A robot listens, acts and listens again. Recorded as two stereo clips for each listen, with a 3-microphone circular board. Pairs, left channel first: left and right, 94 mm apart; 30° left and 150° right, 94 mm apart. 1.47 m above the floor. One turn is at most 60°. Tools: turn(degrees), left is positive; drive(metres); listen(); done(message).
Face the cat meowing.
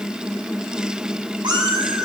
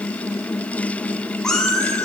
turn(degrees=-55)
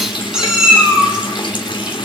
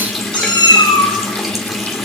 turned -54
turn(degrees=-10)
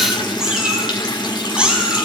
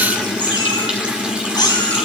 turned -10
turn(degrees=-10)
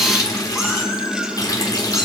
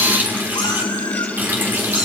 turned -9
listen()
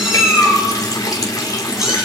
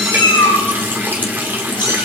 done("Facing the cat meowing.")